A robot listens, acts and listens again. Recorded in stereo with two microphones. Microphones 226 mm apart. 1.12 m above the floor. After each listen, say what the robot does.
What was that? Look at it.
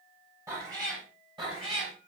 Turn 25° right.
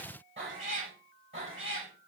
Turn 120° right.
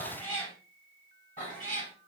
Turn 35° left.
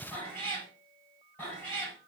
Facing the cat meowing.